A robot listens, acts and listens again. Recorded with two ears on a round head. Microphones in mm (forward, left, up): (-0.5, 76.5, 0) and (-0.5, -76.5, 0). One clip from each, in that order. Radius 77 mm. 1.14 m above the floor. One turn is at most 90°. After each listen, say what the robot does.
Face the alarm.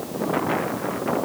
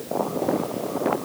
Keep listening.
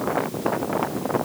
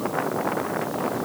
Keep listening.
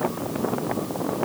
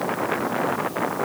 I can't make out an alarm to turn to.